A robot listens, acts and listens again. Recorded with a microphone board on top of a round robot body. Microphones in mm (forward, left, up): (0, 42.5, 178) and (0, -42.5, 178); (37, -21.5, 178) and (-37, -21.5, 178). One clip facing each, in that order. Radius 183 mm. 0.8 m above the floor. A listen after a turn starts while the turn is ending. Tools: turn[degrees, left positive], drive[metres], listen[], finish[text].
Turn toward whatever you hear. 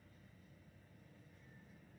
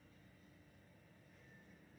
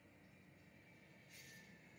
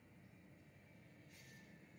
Action: listen[]
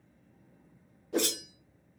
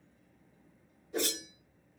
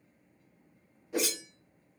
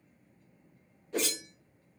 Thought: The whoosh: 80° left.
Action: turn[80]
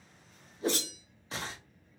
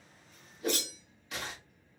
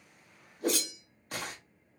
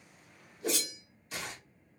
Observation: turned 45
Thought: The whoosh is now 30° left.
Action: turn[30]
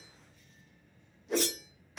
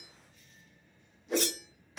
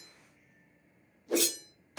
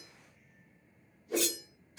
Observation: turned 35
Action: finish[Found it: a whoosh, straight ahead.]